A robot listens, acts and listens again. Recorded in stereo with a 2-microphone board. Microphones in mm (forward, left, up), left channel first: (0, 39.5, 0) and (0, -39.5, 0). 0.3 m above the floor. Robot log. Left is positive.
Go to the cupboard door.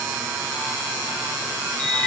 cmd idle
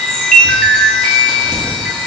cmd idle
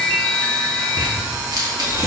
end: I can't make out a cupboard door to turn to.